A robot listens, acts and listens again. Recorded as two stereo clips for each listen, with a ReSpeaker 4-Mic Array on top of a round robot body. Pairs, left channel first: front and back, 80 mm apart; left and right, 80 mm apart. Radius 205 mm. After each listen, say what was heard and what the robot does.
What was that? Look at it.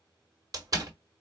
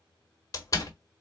The door slam: 135° left. Turn 135° left.
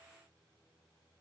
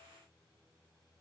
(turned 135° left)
Facing where the door slam came from. I can't hear it now.